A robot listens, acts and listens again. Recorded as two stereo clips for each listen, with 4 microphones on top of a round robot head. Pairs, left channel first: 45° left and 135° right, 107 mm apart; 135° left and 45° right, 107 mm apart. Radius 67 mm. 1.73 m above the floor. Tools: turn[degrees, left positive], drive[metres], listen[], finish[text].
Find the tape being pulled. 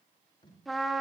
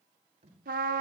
Action: finish[Facing the tape being pulled, over 4 m away.]